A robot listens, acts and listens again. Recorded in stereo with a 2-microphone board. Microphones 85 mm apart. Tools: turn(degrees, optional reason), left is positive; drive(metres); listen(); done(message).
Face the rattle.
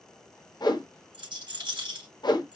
turn(degrees=-65, reason="The rattle: about 65° right or 115° right.")
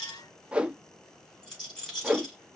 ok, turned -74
done("Facing the rattle.")